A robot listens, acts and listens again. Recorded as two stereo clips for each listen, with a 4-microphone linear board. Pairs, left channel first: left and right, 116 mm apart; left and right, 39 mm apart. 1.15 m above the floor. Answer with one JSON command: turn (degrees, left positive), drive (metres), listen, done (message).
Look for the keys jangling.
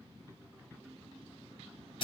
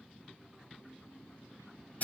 {"listen": true}
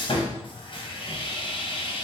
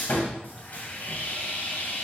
{"listen": true}
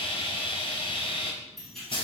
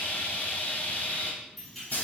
{"turn": 30}
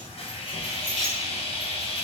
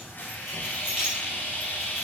{"turn": -10}
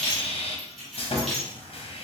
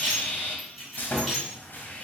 {"done": "Found it: keys jangling, straight ahead."}